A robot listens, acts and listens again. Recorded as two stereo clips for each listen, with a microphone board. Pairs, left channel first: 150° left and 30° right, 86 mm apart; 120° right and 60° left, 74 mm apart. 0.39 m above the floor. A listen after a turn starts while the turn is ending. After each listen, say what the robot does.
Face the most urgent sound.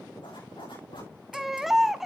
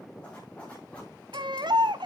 Turn 60° left.
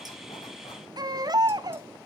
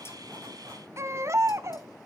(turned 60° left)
Turn 10° left.
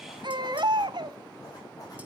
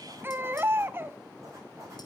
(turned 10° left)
Facing the baby crying, under 1 m away.